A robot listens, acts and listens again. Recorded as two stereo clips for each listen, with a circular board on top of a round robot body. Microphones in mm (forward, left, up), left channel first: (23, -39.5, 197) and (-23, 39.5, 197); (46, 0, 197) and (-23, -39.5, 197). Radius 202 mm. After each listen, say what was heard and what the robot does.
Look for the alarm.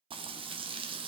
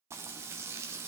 Keep listening.
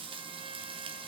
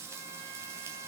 Keep listening.
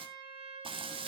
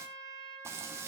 I can't make out an alarm to turn to.